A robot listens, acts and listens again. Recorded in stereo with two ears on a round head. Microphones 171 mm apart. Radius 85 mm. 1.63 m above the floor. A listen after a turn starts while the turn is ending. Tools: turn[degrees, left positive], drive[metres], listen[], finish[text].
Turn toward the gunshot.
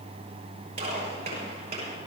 Thought: The gunshot: about 35° right or 145° right.
Action: turn[-35]
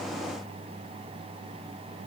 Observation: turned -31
Action: listen[]
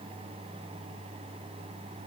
Action: finish[I heard a gunshot, but can't make it out now. It was about 5° right or 110° right.]